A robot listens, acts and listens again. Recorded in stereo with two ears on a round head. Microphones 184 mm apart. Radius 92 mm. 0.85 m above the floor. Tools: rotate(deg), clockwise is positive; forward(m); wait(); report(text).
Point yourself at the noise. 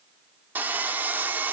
rotate(30)
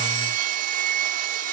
rotate(140)
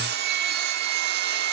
rotate(50)
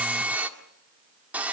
rotate(10)
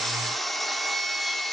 report("Facing the sawing, 1 to 2 m away.")